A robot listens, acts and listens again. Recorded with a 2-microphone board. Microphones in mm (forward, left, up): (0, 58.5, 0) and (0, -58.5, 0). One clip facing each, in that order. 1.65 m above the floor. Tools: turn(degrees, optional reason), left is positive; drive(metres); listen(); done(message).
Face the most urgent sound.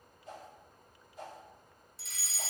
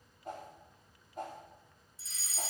turn(degrees=65, reason="The fire alarm: about 65° left or 115° left.")
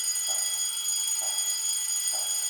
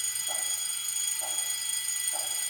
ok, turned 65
turn(degrees=30, reason="So it is at 30° left.")
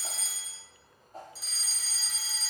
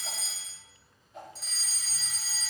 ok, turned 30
done("Found it: a fire alarm, straight ahead.")